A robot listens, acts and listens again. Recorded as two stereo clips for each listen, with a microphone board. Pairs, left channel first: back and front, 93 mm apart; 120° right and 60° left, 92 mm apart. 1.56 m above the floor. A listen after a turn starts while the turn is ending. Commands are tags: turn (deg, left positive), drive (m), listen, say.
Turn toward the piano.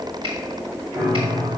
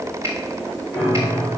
<turn deg="-55"/>
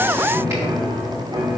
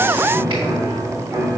<say>Found it: a piano, straight ahead, 2 to 4 m away.</say>